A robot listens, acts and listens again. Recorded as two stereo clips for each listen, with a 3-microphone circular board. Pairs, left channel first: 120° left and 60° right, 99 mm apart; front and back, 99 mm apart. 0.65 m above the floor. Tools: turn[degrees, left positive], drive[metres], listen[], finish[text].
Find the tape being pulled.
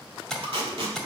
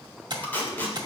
Thought: The tape being pulled: 70° right.
Action: turn[-70]
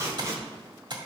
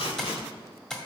Action: finish[Found it: tape being pulled, straight ahead, 2 to 4 m away.]